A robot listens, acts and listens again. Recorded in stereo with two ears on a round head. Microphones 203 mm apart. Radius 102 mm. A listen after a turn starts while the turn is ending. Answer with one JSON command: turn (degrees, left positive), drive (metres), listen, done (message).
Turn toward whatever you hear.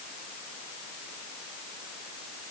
{"listen": true}
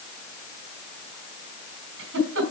{"turn": -55}
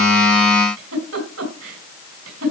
{"turn": -70}
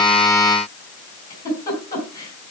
{"turn": 15}
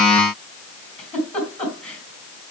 {"done": "Facing the giggle, 2 to 4 m away."}